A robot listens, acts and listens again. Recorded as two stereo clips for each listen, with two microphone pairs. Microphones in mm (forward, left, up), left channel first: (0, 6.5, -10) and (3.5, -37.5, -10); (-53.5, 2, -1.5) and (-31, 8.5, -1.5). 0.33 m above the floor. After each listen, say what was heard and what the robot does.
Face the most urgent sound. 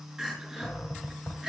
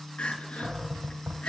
The crying: 160° right. Turn 160° right.
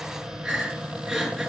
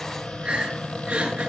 Facing the crying.